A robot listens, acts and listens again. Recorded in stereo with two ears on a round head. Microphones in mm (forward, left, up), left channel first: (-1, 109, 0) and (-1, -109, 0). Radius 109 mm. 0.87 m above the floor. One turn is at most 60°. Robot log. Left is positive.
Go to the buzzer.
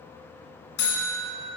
note: The buzzer: about 65° left or 115° left.
cmd yaw +60
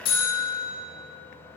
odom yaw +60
note: So it is at 40° left.
cmd yaw +40
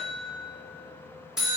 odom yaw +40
cmd fwd 1.0
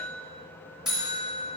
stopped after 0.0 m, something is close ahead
end: Blocked. The buzzer is further on, straight ahead.